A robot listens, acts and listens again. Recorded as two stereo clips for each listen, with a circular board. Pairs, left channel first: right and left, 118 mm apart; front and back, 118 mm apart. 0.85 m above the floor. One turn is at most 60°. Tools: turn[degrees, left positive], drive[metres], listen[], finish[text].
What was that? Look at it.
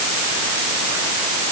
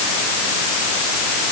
Action: listen[]
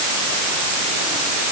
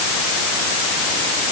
Action: listen[]
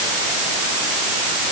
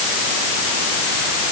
Action: finish[I can't make out anything to turn to.]